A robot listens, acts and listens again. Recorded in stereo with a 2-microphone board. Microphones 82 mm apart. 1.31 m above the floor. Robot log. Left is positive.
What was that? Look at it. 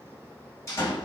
note: The door slam: about 35° left or 145° left.
cmd yaw +35
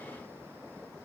cmd idle
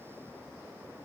end: I heard a door slam, but can't make it out now. It was about straight ahead or 110° left.